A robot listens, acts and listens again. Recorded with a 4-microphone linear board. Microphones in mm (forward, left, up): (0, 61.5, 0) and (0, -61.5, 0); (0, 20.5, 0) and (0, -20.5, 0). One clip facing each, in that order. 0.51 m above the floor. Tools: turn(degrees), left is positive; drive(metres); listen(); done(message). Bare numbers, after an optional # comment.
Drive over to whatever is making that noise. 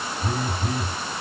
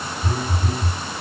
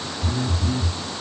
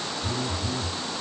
turn(90)
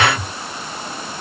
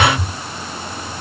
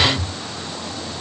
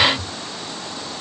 drive(1.0)
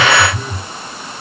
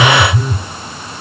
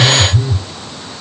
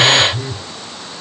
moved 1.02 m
drive(1.0)
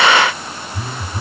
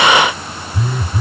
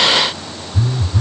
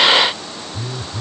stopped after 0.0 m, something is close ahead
done("Arrived at the phone buzzing, straight ahead.")